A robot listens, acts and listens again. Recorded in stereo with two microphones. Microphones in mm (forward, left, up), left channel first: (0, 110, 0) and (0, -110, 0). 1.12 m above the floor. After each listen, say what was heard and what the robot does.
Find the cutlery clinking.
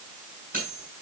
The cutlery clinking: about 40° right or 140° right. Turn 40° right.
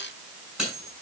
Facing the cutlery clinking.